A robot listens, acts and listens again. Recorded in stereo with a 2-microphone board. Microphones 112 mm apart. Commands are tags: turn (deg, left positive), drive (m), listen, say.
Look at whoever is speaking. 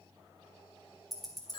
<listen/>
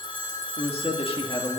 <turn deg="55"/>
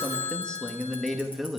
<say>Found it: a man speaking, straight ahead, 1 to 2 m away.</say>